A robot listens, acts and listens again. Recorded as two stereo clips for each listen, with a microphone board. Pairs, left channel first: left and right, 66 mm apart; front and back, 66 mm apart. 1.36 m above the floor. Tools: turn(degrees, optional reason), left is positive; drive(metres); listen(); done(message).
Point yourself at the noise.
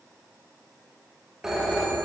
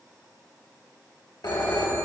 turn(degrees=-10, reason="The phone ringing: 10° right.")
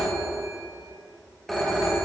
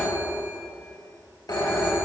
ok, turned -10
done("Facing the phone ringing.")